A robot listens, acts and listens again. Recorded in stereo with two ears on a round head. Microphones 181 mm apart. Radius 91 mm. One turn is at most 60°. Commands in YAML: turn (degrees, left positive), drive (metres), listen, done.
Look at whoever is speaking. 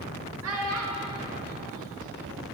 turn: -60
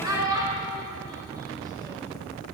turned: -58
turn: -15
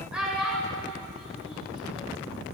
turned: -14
done: "Facing the child speaking, 1 to 2 m away."